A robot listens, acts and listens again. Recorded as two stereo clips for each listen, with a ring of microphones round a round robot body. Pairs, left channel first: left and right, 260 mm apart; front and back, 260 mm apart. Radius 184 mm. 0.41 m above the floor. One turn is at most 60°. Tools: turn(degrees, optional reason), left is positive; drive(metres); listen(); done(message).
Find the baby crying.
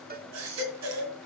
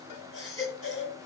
turn(degrees=-60, reason="The baby crying: 105° right.")
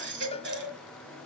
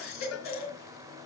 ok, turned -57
turn(degrees=-45, reason="The baby crying is now 45° right.")
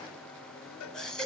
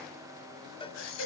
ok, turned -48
done("Facing the baby crying.")